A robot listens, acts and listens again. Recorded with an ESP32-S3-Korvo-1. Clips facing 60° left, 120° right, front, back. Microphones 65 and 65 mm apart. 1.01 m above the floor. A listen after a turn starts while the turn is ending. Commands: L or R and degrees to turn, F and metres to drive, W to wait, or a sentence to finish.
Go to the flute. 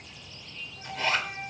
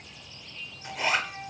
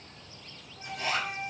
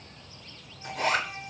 L25
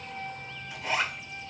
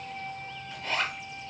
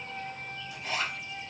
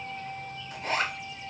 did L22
F1.0
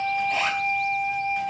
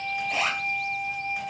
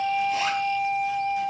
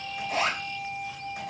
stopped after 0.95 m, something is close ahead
I am next to the flute.